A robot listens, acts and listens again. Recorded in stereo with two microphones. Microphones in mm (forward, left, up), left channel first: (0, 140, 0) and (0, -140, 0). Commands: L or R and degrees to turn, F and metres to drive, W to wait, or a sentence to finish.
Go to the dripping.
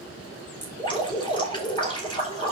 L15
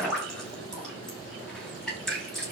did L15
F1.0
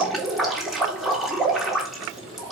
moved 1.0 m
F1.0
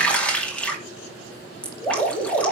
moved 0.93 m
F1.0
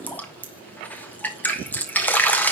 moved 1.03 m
F1.0
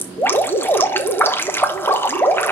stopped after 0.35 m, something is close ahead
L10
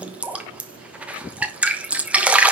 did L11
Arrived at the dripping, straight ahead.